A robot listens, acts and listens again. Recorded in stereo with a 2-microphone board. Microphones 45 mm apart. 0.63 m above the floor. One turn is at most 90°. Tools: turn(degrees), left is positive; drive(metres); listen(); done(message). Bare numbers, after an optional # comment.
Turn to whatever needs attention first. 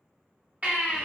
# The baby crying: about 35° right or 145° right.
turn(-35)
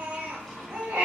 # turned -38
# So it is at 110° right.
turn(-90)
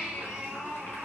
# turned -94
# The baby crying is now 15° right.
turn(-15)
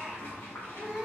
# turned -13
done("Found it: a baby crying, straight ahead, under 1 m away.")